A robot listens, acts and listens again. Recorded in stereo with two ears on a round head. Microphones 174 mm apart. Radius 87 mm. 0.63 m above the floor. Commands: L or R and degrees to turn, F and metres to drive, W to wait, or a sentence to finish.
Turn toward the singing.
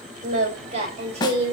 R35
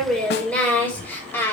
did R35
L10
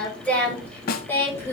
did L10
L15
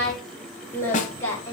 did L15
L15
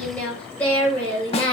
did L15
L10
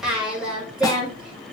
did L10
Found it: singing, straight ahead.